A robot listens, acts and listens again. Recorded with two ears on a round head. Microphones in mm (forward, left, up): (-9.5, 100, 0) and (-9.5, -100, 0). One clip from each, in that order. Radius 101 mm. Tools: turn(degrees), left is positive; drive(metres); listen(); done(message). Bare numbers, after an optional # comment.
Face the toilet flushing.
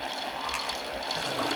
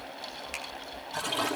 turn(-90)
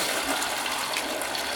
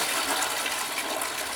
done("Found it: a toilet flushing, straight ahead, over 4 m away.")